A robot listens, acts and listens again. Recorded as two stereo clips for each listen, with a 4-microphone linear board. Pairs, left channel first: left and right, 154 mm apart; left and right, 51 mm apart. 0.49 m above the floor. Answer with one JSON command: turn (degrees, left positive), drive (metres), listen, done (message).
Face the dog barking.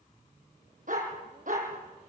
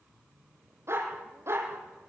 {"turn": -60}
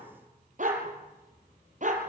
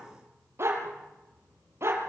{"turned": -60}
{"turn": -55}
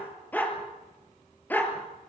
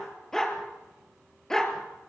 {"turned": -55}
{"turn": 10}
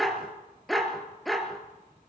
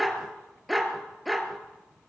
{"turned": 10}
{"done": "Found it: a dog barking, straight ahead."}